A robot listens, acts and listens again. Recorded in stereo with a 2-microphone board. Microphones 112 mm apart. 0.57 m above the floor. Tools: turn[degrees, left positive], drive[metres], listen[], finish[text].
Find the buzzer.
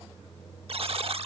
Thought: The buzzer: about 60° right or 120° right.
Action: turn[-60]
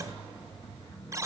Thought: So it is at 30° right.
Action: turn[-30]
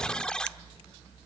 Thought: The buzzer is now 10° left.
Action: turn[10]
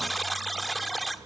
Action: finish[Facing the buzzer, 1 to 2 m away.]